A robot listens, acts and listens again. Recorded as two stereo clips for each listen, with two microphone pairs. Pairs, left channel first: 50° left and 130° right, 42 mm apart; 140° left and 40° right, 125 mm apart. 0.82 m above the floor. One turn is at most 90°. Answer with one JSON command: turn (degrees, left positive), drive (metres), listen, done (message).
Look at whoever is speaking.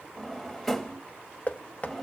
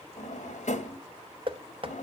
{"listen": true}
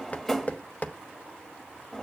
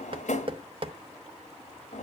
{"listen": true}
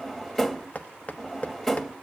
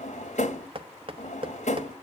{"done": "I can't make out anyone speaking to turn to."}